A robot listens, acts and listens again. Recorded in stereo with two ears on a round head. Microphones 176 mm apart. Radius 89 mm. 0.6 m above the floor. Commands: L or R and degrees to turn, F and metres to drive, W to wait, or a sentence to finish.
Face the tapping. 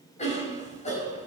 W
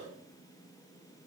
W
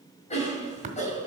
R35
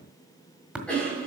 Found it: tapping, straight ahead.